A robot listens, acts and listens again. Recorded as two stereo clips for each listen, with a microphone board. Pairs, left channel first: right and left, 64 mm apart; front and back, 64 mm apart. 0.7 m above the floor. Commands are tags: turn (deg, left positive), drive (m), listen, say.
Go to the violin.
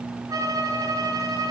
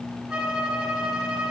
<turn deg="110"/>
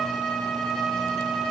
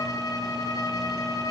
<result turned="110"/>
<drive m="1.0"/>
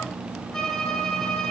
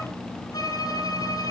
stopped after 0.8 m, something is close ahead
<say>Blocked. The violin is further on, straight ahead.</say>